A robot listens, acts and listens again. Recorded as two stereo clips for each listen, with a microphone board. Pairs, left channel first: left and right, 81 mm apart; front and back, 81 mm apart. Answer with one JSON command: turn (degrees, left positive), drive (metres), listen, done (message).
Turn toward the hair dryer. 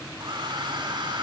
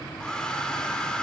{"turn": -80}
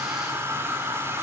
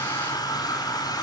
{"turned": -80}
{"turn": -30}
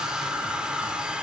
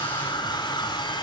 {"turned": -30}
{"turn": -10}
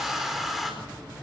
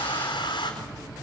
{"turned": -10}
{"done": "Facing the hair dryer, over 4 m away."}